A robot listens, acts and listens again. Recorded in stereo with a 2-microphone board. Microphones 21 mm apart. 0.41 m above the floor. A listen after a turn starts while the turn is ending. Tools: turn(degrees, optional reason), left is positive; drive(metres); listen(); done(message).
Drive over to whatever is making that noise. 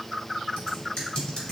turn(degrees=45, reason="The typing on a keyboard: about 45° left or 135° left.")
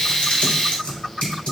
turn(degrees=85, reason="So it is at 85° left.")
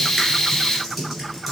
drive(metres=1.0)
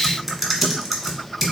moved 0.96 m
drive(metres=1.0)
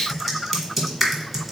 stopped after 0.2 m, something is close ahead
done("Arrived at the typing on a keyboard, straight ahead.")